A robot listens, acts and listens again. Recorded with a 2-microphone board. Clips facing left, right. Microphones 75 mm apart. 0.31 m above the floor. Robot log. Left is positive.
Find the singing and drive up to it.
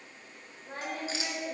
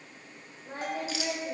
cmd yaw -30
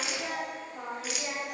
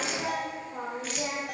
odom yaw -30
note: So it is at 145° right.
cmd yaw -145
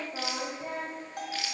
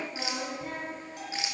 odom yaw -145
note: The singing is now 15° left.
cmd yaw +15
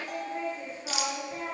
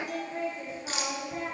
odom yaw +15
cmd fwd 1.0
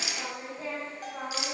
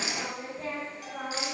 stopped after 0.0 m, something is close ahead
end: Blocked. The singing is further on, straight ahead.